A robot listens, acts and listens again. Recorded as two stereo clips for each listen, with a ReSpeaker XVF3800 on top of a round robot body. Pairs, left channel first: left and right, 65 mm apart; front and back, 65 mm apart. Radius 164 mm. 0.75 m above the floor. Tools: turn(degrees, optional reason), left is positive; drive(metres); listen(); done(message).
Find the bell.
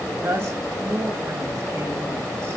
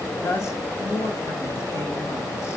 listen()
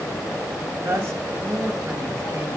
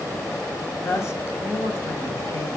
listen()
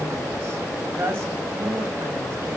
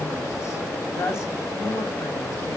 done("I can't make out a bell to turn to.")